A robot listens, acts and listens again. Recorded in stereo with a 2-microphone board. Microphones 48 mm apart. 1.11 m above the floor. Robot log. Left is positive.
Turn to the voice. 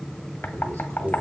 cmd yaw -90
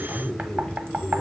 end: Facing the man speaking, over 4 m away.